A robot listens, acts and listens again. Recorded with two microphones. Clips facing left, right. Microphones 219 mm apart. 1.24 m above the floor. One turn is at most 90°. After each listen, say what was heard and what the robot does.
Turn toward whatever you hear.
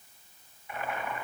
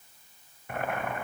The boiling: about 55° right or 125° right. Turn 55° right.
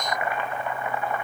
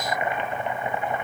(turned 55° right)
So it is at 30° right. Turn 30° right.
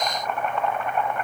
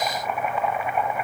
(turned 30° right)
The boiling is now 10° right. Turn 10° right.
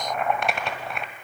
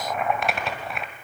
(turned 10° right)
Facing the boiling, 1 to 2 m away.